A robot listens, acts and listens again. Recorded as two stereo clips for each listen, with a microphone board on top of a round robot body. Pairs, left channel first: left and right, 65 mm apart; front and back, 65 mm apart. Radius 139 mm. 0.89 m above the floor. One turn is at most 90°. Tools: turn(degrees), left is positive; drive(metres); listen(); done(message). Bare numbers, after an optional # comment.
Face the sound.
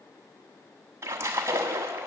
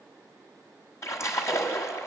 # The splash: 45° right.
turn(-45)
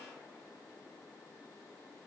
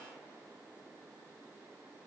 done("Facing where the splash came from. I can't hear it now.")